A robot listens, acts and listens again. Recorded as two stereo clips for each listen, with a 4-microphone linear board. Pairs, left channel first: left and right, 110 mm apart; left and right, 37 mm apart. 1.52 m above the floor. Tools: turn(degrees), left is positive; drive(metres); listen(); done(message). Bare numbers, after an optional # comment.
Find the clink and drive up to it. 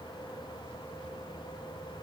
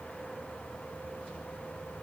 listen()
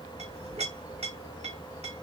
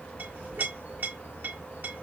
# The clink: about 75° right or 105° right.
turn(-75)
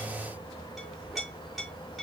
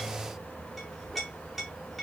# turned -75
drive(1.0)
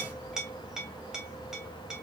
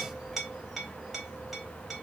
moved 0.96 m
drive(1.0)
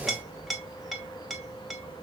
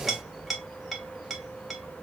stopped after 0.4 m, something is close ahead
done("I am next to the clink.")